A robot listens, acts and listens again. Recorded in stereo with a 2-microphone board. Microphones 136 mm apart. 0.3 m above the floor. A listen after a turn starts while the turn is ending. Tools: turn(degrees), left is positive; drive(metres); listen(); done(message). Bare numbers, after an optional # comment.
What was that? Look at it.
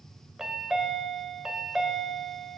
turn(-30)
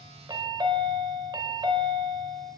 # So it is at 145° right.
turn(-145)
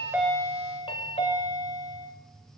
# The chime is now 50° left.
turn(50)
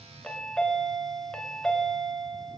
done("Found it: a chime, straight ahead.")